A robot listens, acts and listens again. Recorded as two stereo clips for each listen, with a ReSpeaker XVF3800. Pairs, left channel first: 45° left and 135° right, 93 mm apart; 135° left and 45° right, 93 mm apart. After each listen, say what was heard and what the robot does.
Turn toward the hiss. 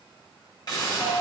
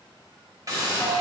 Found it: a hiss, straight ahead, 1 to 2 m away.